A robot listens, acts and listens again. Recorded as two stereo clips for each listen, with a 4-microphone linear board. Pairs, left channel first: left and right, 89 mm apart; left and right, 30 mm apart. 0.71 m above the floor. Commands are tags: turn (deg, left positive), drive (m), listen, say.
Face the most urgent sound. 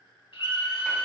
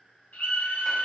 <turn deg="55"/>
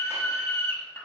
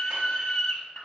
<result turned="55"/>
<turn deg="10"/>
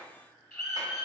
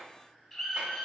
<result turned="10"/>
<say>Facing the scream, 1 to 2 m away.</say>